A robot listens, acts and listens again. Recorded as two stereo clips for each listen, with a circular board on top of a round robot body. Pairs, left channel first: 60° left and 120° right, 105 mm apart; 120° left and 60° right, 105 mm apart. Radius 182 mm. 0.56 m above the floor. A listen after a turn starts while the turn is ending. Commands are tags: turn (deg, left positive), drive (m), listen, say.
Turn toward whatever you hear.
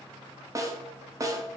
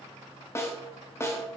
<turn deg="-175"/>
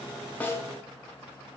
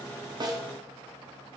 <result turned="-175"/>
<say>Found it: a snare drum, straight ahead.</say>